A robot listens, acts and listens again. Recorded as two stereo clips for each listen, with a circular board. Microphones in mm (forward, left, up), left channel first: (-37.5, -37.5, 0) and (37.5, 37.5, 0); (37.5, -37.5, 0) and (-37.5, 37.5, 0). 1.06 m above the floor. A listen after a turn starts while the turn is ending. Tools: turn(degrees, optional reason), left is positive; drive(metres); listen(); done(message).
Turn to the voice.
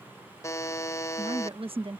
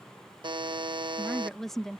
turn(degrees=40, reason="The woman speaking: 40° left.")
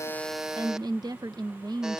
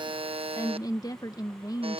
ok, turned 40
done("Facing the woman speaking.")